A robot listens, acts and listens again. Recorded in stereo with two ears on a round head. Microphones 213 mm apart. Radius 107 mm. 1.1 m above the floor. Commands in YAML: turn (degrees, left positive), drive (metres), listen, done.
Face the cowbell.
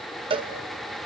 turn: -20
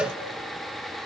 done: "Facing the cowbell."